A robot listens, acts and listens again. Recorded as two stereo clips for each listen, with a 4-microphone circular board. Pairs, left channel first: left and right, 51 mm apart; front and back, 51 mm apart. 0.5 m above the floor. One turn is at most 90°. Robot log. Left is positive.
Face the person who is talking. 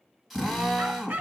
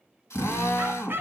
cmd idle
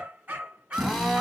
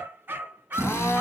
cmd idle
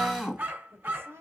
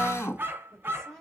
note: The woman speaking: 80° right.
cmd yaw -80
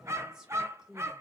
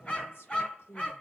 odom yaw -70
note: The woman speaking is now 10° right.
cmd yaw -10
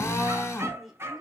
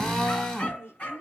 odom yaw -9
end: Facing the woman speaking, 1 to 2 m away.